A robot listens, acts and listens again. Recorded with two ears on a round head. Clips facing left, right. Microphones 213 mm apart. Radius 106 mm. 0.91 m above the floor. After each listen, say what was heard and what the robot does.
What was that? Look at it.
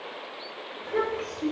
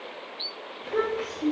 Turn 30° right.
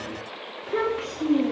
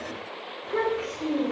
So it is at 35° left. Turn 35° left.
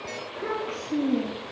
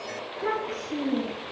The child speaking is now 20° left. Turn 20° left.
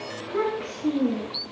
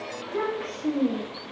The child speaking is now 20° left. Turn 20° left.
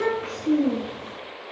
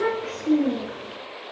Facing the child speaking, 1 to 2 m away.